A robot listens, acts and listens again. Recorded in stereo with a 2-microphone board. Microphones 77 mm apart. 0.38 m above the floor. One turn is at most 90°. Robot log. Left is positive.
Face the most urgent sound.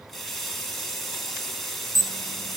note: The alarm: about 40° right or 140° right.
cmd yaw -40
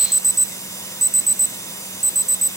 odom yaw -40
end: Facing the alarm.